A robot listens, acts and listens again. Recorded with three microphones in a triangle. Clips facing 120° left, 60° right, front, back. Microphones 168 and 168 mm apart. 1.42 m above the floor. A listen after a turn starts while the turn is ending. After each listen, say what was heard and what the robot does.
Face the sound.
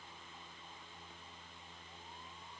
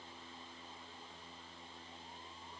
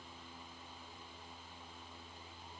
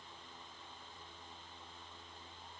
Keep listening.
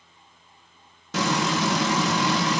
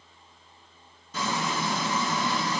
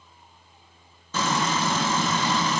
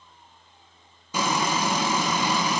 The frying: 105° left. Turn 105° left.
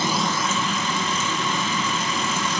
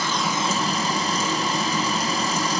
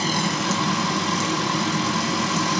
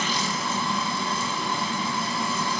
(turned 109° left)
Facing the frying.